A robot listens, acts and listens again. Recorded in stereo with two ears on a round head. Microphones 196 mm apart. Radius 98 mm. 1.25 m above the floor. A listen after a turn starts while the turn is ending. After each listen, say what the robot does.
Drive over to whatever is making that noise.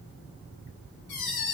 Turn 50° left.
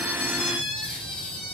Turn 70° left.
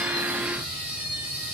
Drive 1.0 m forward.
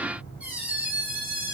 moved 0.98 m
Turn 10° right.
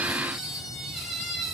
Drive 1.0 m forward.
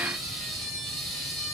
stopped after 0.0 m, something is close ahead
I am next to the squeak.